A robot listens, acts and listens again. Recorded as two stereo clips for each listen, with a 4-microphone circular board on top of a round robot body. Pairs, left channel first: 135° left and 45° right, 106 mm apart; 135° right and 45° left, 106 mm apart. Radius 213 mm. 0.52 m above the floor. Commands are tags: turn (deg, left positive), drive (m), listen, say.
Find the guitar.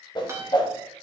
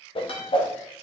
<turn deg="-105"/>
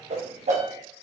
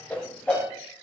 <listen/>
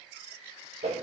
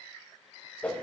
<listen/>
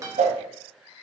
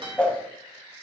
<turn deg="15"/>
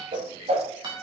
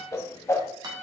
<say>Found it: a guitar, straight ahead.</say>